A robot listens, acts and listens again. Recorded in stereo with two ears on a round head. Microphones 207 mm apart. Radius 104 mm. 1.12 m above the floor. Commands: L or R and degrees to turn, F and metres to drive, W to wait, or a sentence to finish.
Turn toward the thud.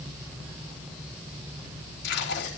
W
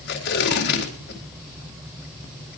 W
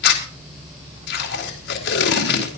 I can't make out a thud to turn to.